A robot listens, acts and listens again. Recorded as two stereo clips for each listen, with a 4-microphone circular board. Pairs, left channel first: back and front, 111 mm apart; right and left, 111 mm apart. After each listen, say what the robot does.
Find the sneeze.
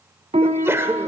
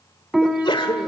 Turn 60° right.
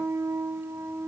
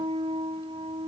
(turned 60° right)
Facing where the sneeze came from. I can't hear it now.